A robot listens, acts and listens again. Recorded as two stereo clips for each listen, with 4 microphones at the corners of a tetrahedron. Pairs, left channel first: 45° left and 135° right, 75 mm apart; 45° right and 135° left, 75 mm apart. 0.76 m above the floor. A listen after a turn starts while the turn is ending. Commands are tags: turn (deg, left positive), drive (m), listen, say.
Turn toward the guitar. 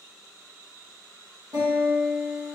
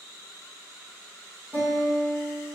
<turn deg="-175"/>
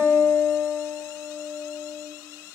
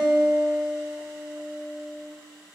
<say>Found it: a guitar, straight ahead.</say>